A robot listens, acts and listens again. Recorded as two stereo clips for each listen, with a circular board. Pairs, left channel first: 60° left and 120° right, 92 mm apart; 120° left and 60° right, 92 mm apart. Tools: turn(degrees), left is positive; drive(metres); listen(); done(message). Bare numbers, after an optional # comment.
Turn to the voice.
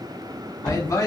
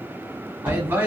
# The man speaking: 10° left.
turn(10)
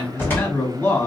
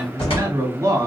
done("Found it: a man speaking, straight ahead.")